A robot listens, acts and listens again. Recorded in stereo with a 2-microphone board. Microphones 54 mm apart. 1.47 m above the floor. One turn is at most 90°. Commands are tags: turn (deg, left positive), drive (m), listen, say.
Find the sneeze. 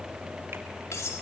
<listen/>
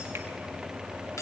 <listen/>
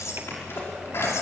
<turn deg="50"/>
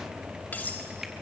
<listen/>
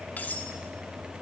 <say>I heard a sneeze, but can't make it out now. It was about straight ahead or 80° left.</say>